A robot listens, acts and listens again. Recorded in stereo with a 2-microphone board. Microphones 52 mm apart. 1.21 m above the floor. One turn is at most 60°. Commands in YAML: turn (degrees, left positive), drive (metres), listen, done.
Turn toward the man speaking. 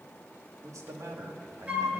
turn: -60
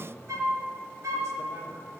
turn: -55
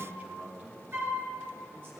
turn: -40
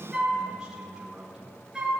turn: -10
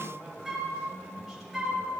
done: "Facing the man speaking, 2 to 4 m away."